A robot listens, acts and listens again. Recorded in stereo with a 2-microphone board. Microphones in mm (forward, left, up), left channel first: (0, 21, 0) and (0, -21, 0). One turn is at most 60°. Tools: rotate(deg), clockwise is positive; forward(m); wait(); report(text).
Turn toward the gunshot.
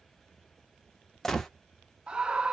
rotate(-30)
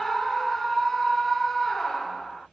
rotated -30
wait()
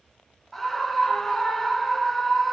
report("I heard a gunshot, but can't make it out now. It was about 25° right or 145° left.")